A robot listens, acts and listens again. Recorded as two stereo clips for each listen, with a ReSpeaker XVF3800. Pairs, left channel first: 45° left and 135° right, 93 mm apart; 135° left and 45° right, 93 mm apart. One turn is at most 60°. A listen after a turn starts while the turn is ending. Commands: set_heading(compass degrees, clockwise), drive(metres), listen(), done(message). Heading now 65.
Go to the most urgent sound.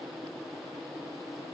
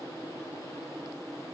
listen()
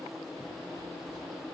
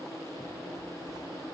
listen()
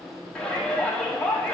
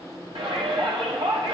set_heading(95)
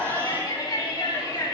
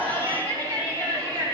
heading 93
drive(1.0)
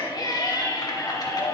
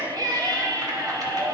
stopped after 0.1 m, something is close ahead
done("Something is in my way. I am facing the shout but have not reached it.")